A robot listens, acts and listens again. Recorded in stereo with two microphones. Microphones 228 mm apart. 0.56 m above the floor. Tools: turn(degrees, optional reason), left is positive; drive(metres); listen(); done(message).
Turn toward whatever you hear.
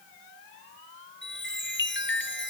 turn(degrees=50, reason="The chime: about 50° left or 130° left.")
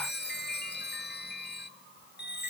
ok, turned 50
turn(degrees=60, reason="So it is at 60° left.")
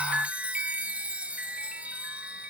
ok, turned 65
done("Facing the chime, 1 to 2 m away.")